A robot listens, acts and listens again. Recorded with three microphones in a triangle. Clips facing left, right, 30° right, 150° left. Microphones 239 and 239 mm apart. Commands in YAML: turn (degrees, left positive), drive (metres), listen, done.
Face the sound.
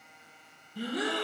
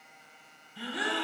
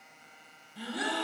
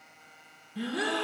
turn: 130
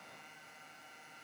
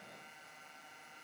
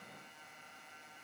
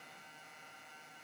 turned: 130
done: "I heard a gasp from this way, but can't make it out now."